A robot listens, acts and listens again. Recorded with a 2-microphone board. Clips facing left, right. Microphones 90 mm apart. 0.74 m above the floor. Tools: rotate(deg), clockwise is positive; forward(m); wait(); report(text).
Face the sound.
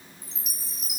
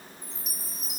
rotate(-70)
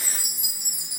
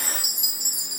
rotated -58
rotate(-40)
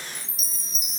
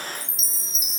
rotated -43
report("Found it: a chime, straight ahead, under 1 m away.")